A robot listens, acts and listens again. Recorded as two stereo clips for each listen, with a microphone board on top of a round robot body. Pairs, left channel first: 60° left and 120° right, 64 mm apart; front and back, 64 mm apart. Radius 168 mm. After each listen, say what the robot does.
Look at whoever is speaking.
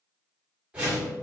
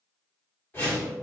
Keep listening.
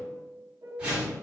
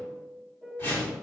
Keep listening.
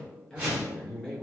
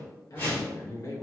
Turn 15° right.
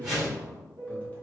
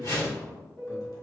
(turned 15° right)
Facing the man speaking, 1 to 2 m away.